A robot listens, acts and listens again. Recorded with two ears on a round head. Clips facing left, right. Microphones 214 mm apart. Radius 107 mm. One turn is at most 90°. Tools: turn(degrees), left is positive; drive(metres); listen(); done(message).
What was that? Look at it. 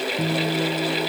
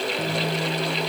turn(degrees=15)
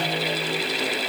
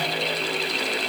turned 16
listen()
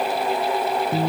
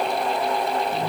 turn(degrees=90)
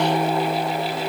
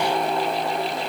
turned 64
turn(degrees=85)
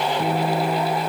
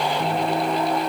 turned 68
turn(degrees=15)
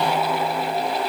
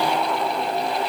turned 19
listen()
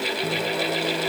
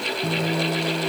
done("Facing the guitar.")